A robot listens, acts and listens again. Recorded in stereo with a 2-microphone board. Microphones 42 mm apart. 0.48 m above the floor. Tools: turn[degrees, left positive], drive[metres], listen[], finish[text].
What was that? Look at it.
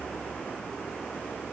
Action: listen[]
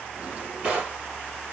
Thought: The drawer: about 30° right or 150° right.
Action: turn[-30]
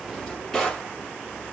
Action: finish[Facing the drawer.]